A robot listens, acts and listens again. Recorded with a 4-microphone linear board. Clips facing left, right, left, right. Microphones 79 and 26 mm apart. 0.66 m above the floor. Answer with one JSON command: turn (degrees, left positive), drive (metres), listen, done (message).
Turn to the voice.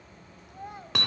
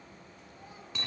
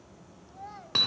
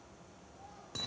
{"turn": 60}
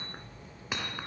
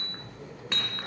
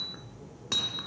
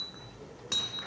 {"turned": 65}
{"listen": true}
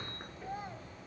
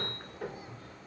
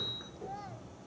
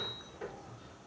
{"listen": true}
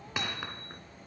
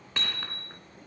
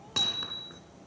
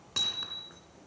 {"done": "I heard a child speaking, but can't make it out now. It was about 5° right or 55° left."}